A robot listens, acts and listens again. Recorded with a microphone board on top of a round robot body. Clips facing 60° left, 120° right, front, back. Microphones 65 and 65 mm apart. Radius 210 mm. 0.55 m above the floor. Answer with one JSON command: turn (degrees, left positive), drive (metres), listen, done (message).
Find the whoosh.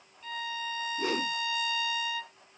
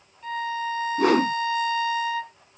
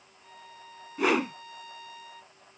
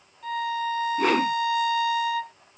{"turn": -85}
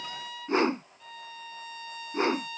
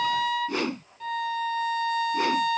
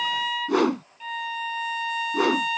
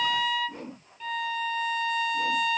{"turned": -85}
{"done": "Facing the whoosh."}